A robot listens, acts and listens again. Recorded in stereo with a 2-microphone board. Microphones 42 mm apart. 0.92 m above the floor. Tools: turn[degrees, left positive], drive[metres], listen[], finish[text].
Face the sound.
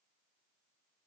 Action: listen[]
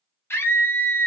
Thought: The scream: about 70° left or 110° left.
Action: turn[70]
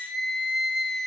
Action: finish[Found it: a scream, straight ahead, under 1 m away.]